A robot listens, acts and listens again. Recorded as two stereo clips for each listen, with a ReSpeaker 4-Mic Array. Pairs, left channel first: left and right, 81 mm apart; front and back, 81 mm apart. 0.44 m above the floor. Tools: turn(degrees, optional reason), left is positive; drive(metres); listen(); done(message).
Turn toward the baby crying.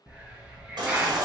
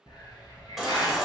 turn(degrees=-95, reason="The baby crying: 95° right.")
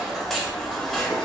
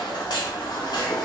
done("Found it: a baby crying, straight ahead.")